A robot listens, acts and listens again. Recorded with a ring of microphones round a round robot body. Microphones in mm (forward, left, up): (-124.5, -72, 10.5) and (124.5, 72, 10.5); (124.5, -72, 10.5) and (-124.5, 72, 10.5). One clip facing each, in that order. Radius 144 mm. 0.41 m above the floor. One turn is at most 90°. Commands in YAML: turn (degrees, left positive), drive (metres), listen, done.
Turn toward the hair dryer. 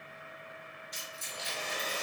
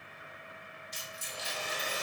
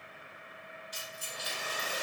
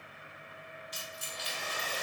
turn: -50
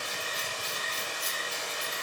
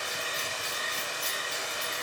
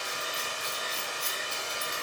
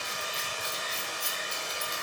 done: "Found it: a hair dryer, straight ahead."